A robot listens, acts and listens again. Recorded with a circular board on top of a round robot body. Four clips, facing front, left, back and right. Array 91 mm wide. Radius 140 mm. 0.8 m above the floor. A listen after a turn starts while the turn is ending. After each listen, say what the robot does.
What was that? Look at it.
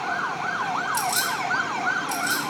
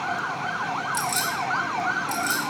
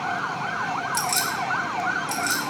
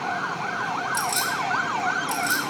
Turn 170° right.
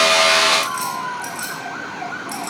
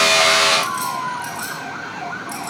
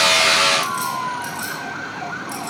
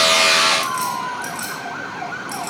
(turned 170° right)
Turn 40° right.
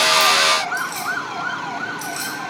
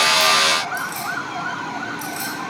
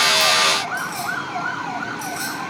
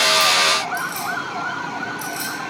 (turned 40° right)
Turn 10° right.
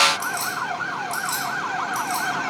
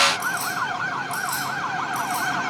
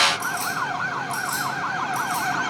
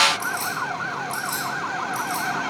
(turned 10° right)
Found it: keys jangling, straight ahead.